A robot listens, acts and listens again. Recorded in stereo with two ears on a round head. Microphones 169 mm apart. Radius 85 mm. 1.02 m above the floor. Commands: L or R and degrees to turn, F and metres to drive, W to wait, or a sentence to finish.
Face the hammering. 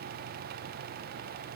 W
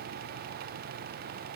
W
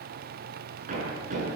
R40
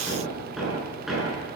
Facing the hammering, over 4 m away.